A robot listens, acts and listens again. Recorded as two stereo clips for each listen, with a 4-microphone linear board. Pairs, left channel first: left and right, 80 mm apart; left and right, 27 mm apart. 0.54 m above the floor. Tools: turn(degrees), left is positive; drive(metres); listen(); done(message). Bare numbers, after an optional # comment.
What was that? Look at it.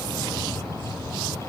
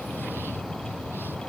listen()
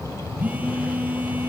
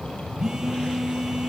# The phone buzzing: about 20° right or 160° right.
turn(-20)
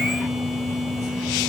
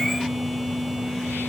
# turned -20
done("Found it: a phone buzzing, straight ahead, 2 to 4 m away.")